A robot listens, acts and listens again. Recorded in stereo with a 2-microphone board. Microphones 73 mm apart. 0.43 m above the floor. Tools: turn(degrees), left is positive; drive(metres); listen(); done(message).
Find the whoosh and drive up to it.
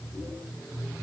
listen()
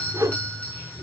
turn(degrees=-50)
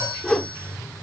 drive(metres=1.0)
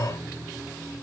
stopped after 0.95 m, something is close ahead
listen()
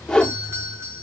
turn(degrees=10)
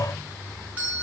listen()
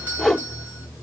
done("I am next to the whoosh.")